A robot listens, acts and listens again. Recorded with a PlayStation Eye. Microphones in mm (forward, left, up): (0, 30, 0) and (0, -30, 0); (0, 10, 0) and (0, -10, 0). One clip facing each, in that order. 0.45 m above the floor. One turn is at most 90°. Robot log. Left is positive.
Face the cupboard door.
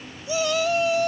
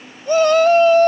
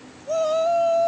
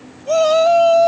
cmd idle
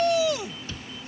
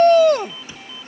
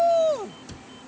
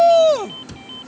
note: The cupboard door: about 15° right or 165° right.
cmd yaw -15
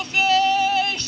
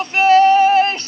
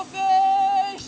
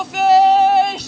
cmd idle
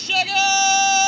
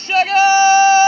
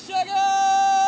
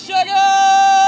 cmd idle
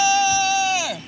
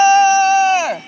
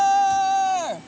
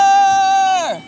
end: I heard a cupboard door, but can't make it out now. It was about straight ahead or 150° right.